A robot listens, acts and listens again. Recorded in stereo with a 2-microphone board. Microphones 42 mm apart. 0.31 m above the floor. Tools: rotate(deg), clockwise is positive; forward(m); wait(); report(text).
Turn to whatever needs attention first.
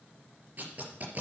wait()
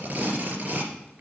wait()
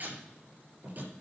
report("I can't make out anything urgent, only tape being pulled.")